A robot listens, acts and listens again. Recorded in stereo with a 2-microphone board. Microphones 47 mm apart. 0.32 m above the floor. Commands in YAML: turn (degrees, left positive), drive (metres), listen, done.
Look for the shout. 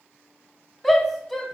turn: 30
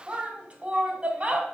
turn: -30
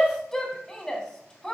turn: 10
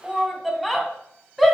done: "Found it: a shout, straight ahead, 2 to 4 m away."